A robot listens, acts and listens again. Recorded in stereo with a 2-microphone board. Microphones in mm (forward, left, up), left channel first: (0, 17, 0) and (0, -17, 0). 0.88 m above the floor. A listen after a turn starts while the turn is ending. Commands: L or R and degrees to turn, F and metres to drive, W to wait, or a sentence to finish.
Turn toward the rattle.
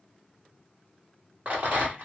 R40
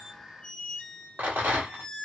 R95
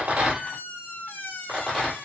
Found it: a rattle, straight ahead.